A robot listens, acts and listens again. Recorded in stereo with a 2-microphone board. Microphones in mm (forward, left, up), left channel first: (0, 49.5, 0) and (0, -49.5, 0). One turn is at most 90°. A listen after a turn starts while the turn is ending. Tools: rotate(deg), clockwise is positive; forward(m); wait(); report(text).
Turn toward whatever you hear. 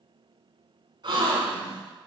rotate(55)
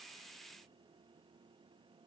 wait()
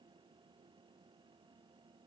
report("I heard a gasp, but can't make it out now. It was about straight ahead or 70° right.")